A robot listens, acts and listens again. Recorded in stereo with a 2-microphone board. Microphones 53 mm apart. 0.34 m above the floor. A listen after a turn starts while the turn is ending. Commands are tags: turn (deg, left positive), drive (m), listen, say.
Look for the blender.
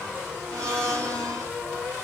<turn deg="-65"/>
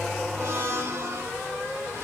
<turn deg="-45"/>
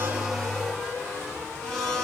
<turn deg="10"/>
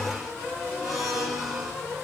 <say>Facing the blender, 2 to 4 m away.</say>